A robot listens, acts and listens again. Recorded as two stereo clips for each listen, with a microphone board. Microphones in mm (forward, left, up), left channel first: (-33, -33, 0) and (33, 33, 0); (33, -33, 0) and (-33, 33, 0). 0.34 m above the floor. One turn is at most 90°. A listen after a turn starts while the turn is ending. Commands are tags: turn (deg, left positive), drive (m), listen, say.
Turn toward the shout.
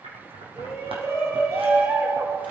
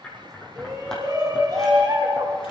<turn deg="90"/>
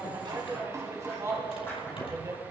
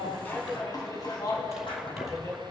<say>Found it: a shout, straight ahead, 2 to 4 m away.</say>